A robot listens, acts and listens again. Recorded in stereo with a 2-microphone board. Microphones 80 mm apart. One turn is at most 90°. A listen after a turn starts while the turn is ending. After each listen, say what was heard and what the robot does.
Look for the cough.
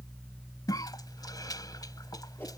The cough: about 55° left or 125° left. Turn 55° left.
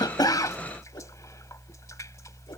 Keep listening.
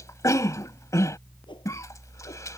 So it is at 50° left. Turn 50° left.
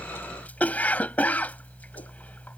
The cough is now 25° left. Turn 25° left.
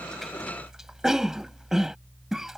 Found it: a cough, straight ahead.